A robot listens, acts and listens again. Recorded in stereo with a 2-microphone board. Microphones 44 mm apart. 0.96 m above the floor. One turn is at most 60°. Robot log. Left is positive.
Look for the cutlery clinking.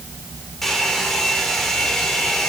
cmd idle
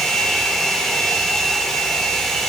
cmd idle
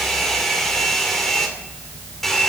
end: I can't make out cutlery clinking, only a hair dryer.